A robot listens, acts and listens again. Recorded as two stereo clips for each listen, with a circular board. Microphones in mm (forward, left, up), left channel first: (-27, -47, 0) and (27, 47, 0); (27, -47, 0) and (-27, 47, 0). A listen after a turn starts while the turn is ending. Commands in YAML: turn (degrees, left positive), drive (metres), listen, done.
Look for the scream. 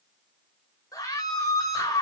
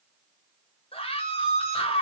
turn: -65
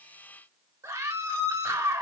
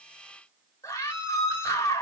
done: "Facing the scream, 2 to 4 m away."